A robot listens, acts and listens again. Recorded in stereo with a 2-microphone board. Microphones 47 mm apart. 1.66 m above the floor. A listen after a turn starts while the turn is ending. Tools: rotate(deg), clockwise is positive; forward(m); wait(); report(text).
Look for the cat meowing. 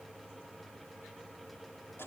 wait()
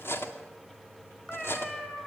rotate(-30)
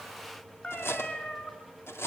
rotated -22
rotate(-145)
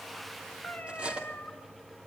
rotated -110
rotate(-30)
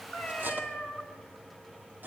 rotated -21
rotate(-10)
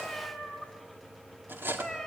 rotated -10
report("Facing the cat meowing.")